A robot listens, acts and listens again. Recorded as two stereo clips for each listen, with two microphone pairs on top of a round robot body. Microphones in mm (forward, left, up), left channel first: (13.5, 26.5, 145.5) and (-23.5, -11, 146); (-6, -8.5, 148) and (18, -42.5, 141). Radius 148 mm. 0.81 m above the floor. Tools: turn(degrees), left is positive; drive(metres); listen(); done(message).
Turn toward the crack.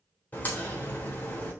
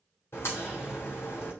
turn(degrees=105)
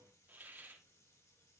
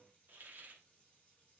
done("I heard a crack from this way, but can't make it out now.")